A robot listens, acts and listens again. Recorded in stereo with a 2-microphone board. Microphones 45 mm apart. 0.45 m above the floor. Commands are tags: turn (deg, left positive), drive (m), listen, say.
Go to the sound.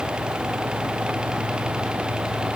<listen/>
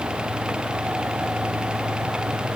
<listen/>
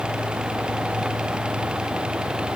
<say>I can't make out anything to turn to.</say>